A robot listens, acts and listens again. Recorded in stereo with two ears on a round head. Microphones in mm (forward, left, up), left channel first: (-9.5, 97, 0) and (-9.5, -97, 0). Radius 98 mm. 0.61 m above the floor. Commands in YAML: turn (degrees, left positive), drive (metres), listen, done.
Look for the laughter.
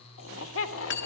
turn: 65
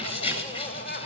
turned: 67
turn: 35
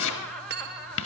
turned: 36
done: "Facing the laughter, 2 to 4 m away."